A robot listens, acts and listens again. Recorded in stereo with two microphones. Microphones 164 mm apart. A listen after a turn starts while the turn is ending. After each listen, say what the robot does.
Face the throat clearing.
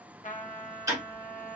Keep listening.
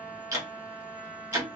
Keep listening.
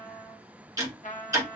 I can't make out throat clearing, only a trumpet and ticking.